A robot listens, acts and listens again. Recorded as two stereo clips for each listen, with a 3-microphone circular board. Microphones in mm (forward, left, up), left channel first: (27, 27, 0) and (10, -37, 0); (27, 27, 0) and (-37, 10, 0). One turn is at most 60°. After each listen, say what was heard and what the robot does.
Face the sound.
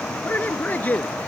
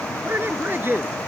The man speaking: 140° left. Turn 60° left.
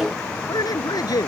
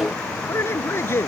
The man speaking is now 65° left. Turn 60° left.
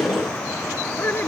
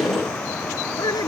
The man speaking is now 20° left. Turn 20° left.
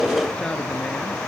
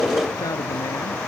Keep listening.
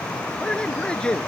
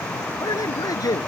Facing the man speaking.